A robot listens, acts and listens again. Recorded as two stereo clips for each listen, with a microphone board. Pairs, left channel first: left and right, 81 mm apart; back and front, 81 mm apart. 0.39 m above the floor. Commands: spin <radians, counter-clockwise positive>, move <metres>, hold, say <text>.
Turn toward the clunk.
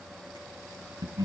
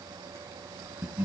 hold
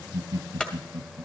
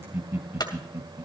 spin 2.88
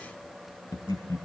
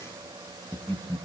say Facing where the clunk came from. I can't hear it now.